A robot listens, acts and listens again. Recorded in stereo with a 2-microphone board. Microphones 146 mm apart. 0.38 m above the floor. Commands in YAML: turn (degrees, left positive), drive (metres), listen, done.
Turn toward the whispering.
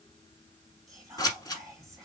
turn: -25
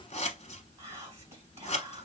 turn: -130
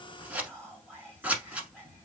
turn: 10
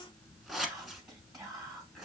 done: "Found it: whispering, straight ahead."